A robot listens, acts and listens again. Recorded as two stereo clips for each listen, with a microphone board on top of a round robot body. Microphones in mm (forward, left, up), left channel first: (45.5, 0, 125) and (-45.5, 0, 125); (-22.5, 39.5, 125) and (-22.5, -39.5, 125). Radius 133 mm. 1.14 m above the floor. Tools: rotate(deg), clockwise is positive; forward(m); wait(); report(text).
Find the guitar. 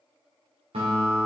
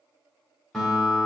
rotate(-175)
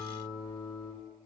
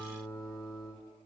rotate(-45)
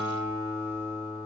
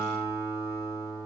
report("Facing the guitar, 1 to 2 m away.")